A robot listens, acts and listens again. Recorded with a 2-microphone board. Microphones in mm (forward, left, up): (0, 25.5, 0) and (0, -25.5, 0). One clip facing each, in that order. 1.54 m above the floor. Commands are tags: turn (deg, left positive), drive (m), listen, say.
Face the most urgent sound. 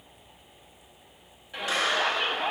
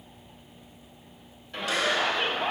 <turn deg="30"/>
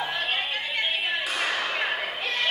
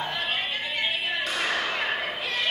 <turn deg="140"/>
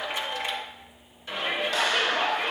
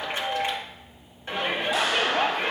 <turn deg="-35"/>
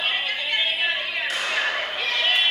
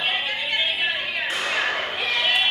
<turn deg="-20"/>
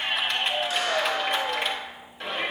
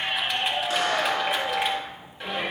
<say>Found it: a shout, straight ahead.</say>